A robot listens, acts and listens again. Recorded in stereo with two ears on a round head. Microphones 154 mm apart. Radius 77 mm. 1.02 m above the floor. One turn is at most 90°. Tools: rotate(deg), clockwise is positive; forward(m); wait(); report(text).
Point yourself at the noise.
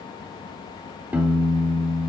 rotate(30)
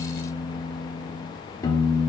rotate(-20)
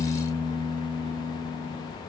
report("Facing the piano.")